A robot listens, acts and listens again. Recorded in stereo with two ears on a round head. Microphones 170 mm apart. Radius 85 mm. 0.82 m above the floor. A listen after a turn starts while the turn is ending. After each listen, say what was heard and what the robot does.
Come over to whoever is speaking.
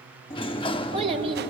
The child speaking: about 35° right or 145° right. Turn 35° right.
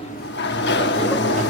Keep listening.
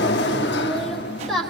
Drive 1.0 m forward.
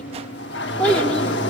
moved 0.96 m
Drive 1.0 m forward.
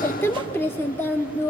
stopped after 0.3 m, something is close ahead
The child speaking is now 15° left. Turn 15° left.
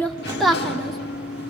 Arrived at the child speaking, straight ahead.